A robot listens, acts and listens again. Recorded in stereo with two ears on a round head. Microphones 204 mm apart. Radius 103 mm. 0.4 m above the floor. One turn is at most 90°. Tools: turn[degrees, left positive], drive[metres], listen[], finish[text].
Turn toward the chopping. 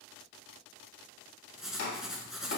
Thought: The chopping: about 40° left or 140° left.
Action: turn[40]
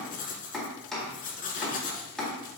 Action: finish[Facing the chopping.]